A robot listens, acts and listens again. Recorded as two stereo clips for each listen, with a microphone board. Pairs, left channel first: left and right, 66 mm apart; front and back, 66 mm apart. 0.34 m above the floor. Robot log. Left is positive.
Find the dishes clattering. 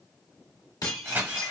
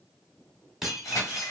note: The dishes clattering: 95° left.
cmd yaw +95
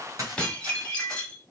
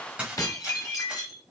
note: The dishes clattering is now 20° left.
cmd yaw +20
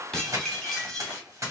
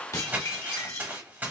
note: The dishes clattering is now 10° left.
cmd yaw +10
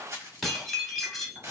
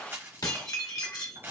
end: Facing the dishes clattering.